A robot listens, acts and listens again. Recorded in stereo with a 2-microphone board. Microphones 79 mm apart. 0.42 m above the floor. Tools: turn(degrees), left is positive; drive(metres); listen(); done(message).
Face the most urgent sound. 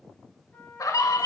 turn(degrees=50)
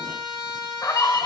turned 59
turn(degrees=60)
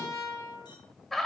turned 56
done("Found it: a scream, straight ahead, 1 to 2 m away.")